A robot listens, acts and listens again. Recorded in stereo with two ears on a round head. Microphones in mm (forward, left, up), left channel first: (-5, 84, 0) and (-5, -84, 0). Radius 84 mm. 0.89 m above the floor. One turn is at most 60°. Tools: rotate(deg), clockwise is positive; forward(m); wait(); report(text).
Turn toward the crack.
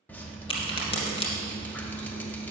rotate(-35)
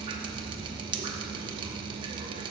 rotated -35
wait()
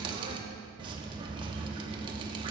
report("I heard a crack, but can't make it out now. It was about straight ahead or 110° left.")